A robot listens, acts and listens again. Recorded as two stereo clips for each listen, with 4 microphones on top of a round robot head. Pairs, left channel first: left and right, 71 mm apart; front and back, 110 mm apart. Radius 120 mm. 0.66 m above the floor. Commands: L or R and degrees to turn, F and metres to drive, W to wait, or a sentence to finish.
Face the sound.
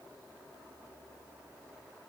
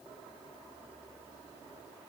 W
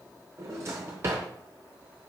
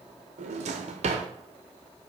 R150
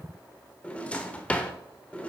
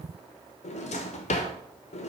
L15
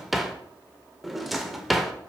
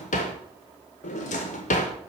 Found it: a drawer, straight ahead, under 1 m away.